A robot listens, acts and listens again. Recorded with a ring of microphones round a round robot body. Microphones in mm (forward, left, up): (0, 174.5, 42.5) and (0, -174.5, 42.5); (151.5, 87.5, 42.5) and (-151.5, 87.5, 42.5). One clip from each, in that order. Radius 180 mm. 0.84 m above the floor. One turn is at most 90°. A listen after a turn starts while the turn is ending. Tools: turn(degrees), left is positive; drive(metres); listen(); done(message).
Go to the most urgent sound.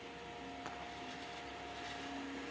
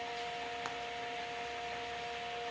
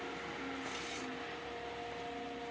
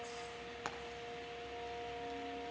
listen()
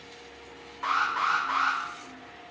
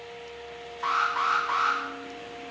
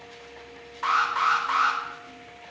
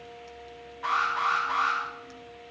drive(metres=1.0)
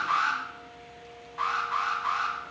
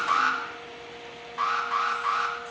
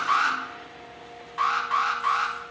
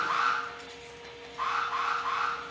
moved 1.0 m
turn(degrees=-15)
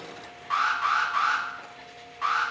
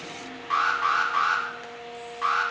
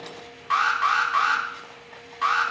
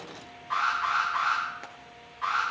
drive(metres=1.0)
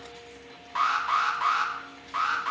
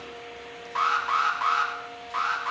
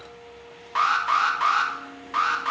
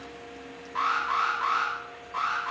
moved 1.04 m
drive(metres=1.0)
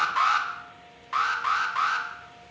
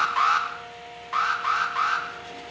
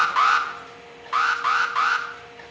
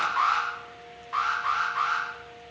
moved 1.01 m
drive(metres=1.0)
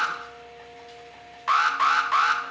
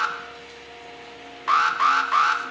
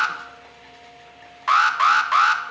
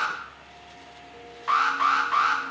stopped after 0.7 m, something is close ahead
done("I am next to the alarm.")